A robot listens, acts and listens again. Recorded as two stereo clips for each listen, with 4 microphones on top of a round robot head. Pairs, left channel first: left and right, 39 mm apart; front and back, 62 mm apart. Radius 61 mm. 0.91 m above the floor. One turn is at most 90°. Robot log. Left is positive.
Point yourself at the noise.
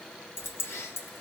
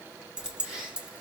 note: The keys jangling: 105° left.
cmd yaw +90
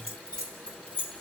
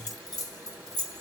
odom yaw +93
note: The keys jangling is now 25° left.
cmd yaw +25
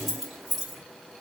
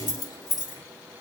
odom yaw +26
end: Found it: keys jangling, straight ahead.